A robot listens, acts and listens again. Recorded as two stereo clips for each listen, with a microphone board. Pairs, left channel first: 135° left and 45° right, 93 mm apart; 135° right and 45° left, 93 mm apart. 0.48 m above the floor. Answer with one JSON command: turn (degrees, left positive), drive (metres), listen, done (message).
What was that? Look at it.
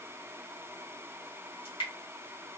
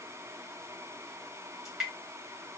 {"turn": 130}
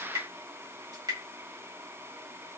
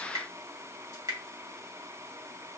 {"done": "Found it: dripping, straight ahead."}